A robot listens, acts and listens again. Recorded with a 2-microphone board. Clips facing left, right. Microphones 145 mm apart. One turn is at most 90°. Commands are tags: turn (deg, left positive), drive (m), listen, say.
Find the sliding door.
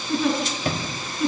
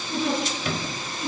<turn deg="40"/>
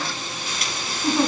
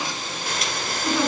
<listen/>
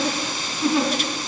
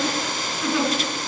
<listen/>
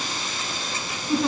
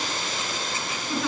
<say>I heard a sliding door, but can't make it out now. It was about straight ahead or 100° left.</say>